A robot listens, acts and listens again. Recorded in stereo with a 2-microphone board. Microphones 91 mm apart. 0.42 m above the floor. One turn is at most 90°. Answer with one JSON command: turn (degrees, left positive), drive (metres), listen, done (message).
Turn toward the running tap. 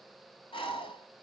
{"listen": true}
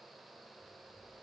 {"listen": true}
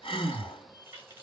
{"turn": -25}
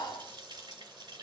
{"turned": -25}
{"turn": -90}
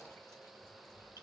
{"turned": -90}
{"turn": -35}
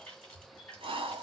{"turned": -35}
{"turn": 15}
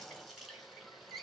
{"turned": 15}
{"done": "Found it: a running tap, straight ahead, 2 to 4 m away."}